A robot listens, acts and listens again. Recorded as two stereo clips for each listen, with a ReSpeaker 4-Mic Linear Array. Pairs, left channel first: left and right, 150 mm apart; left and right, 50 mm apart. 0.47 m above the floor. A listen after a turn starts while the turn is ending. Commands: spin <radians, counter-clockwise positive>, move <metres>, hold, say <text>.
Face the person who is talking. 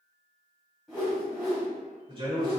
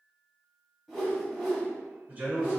spin -0.61
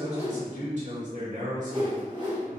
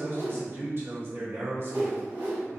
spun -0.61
spin -1.75
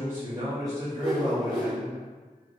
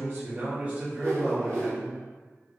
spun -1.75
spin -0.52
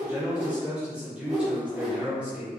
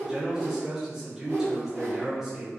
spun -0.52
spin -0.17
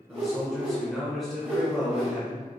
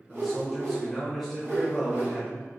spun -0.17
say Facing the man speaking, 1 to 2 m away.